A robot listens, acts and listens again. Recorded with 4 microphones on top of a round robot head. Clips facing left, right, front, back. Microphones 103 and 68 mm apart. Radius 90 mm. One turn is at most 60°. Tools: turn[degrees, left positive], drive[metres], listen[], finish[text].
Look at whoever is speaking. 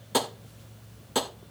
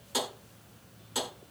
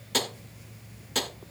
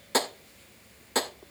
Action: listen[]
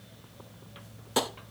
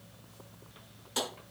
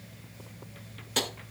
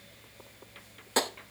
Action: listen[]
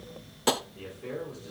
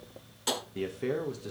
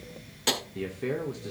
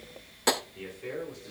Thought: The man speaking: 45° right.
Action: turn[-45]
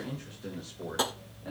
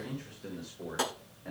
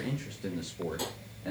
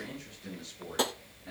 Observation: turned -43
Thought: The man speaking is now 15° left.
Action: turn[15]
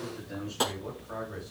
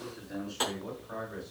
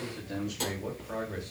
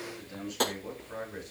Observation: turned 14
Action: finish[Found it: a man speaking, straight ahead.]